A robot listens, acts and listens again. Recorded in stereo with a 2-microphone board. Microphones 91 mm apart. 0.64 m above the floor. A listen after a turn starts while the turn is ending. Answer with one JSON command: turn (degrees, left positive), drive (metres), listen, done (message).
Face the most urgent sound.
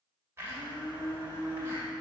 {"listen": true}
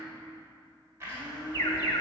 {"turn": 45}
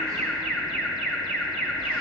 {"done": "Facing the alarm, 1 to 2 m away."}